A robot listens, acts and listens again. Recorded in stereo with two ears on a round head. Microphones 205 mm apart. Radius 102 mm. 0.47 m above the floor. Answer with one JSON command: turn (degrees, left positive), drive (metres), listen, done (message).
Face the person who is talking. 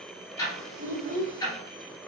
{"turn": -35}
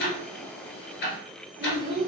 {"done": "Found it: a child speaking, straight ahead."}